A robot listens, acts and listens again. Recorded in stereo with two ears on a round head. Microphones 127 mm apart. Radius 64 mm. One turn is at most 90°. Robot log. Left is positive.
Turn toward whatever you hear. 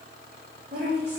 note: The woman speaking: about 60° right or 120° right.
cmd yaw -60
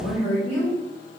end: Found it: a woman speaking, straight ahead, 2 to 4 m away.